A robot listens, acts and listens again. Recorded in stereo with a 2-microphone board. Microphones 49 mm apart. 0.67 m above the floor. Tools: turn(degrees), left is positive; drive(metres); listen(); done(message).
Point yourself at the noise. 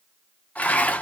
turn(degrees=35)
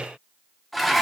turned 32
done("Found it: dishes clattering, straight ahead, under 1 m away.")